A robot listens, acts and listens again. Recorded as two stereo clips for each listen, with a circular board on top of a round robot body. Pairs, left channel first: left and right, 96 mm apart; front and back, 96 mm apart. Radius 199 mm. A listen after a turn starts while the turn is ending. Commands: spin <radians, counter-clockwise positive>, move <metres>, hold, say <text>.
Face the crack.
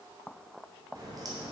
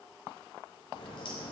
spin -0.70
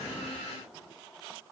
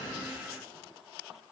say Facing where the crack came from. I can't hear it now.